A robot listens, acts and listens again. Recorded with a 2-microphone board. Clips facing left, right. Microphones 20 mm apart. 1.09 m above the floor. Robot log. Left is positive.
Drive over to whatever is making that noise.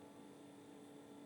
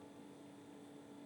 cmd idle
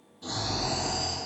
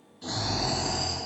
note: The snoring: about 60° right or 120° right.
cmd yaw -60
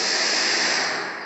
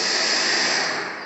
note: So it is at 10° right.
cmd yaw -10
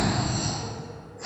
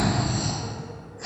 cmd fwd 1.0
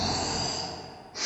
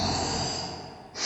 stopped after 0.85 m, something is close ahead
end: I am next to the snoring.